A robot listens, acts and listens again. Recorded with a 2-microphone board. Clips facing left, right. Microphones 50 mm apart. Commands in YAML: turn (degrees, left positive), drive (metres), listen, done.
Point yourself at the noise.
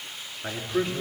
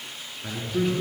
turn: 30
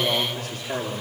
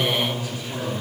turn: 120
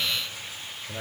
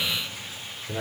done: "Found it: a man speaking, straight ahead, over 4 m away."